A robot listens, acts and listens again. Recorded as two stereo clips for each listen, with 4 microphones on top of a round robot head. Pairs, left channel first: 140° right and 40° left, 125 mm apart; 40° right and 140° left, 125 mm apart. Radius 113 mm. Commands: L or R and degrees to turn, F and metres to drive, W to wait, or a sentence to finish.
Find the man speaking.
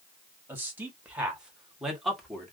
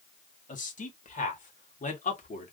R55
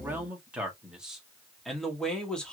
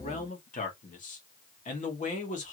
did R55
R55
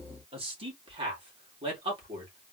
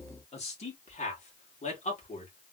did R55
R10
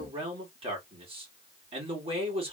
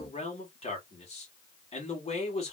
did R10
Facing the man speaking, 2 to 4 m away.